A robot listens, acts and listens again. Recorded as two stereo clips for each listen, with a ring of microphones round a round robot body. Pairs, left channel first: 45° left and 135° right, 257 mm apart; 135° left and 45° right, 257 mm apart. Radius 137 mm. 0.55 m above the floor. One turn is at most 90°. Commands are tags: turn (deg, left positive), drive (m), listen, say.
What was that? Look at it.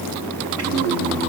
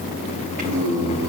<turn deg="-90"/>
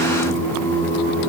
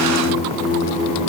<turn deg="-20"/>
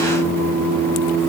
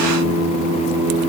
<say>Facing the singing, over 4 m away.</say>